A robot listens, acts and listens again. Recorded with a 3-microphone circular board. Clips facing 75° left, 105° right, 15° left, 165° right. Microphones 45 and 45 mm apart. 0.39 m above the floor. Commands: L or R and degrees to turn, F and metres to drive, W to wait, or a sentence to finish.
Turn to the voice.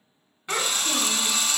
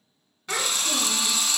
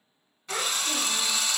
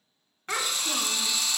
L145
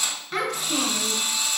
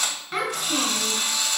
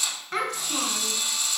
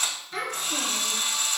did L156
R25
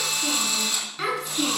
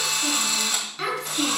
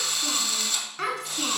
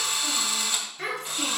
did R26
R15
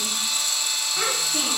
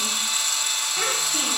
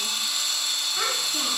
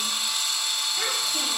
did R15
W
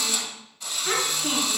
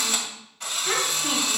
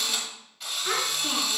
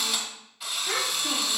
Facing the child speaking, 2 to 4 m away.